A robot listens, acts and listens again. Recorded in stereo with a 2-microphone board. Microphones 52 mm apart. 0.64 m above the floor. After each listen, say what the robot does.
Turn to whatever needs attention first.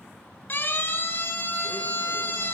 Turn 35° left.
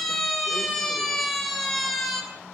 Facing the siren.